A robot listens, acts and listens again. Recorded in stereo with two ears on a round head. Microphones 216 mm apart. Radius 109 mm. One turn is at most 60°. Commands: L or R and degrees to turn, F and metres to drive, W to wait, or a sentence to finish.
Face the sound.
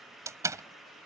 R30
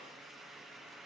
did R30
W
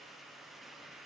I heard a door slam, but can't make it out now. It was about 15° left or 135° right.